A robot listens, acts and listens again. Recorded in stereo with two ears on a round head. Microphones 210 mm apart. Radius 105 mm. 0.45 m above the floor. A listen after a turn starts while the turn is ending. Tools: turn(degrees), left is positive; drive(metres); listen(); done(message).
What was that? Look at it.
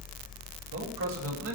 turn(degrees=-60)
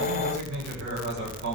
turn(degrees=-55)
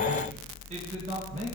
listen()
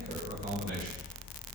listen()
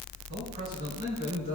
turn(degrees=-45)
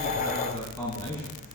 turn(degrees=15)
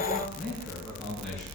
done("Facing the man speaking.")